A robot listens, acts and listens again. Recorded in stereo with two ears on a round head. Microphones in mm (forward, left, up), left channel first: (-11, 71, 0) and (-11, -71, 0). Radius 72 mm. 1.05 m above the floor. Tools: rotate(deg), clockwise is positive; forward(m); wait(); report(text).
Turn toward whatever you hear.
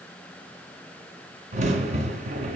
rotate(45)
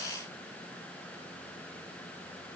wait()
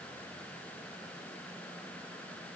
report("I heard a crack, but can't make it out now. It was about straight ahead or 90° right.")